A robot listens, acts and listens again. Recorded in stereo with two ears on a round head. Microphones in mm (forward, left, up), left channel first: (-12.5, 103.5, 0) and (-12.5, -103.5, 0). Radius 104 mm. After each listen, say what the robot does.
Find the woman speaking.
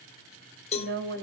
Turn 50° right.
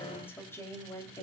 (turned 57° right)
Turn 15° left.
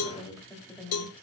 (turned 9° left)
Found it: a woman speaking, straight ahead, 2 to 4 m away.